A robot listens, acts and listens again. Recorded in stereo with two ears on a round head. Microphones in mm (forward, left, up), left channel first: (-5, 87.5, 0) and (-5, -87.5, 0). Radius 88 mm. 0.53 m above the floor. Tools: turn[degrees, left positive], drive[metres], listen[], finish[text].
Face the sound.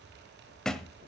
Action: turn[30]
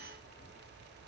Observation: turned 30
Action: listen[]
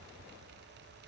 Action: finish[I heard a thud, but can't make it out now. It was about 25° right or 145° left.]